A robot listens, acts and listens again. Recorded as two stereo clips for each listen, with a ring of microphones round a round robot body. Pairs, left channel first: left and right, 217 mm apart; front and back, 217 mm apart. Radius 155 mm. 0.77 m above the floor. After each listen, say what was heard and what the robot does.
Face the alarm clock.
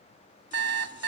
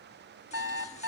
The alarm clock: 100° right. Turn 100° right.
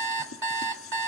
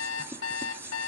The alarm clock is now 55° right. Turn 55° right.
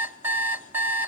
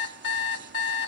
The alarm clock is now 10° right. Turn 10° right.
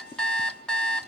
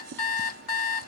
Found it: an alarm clock, straight ahead, 1 to 2 m away.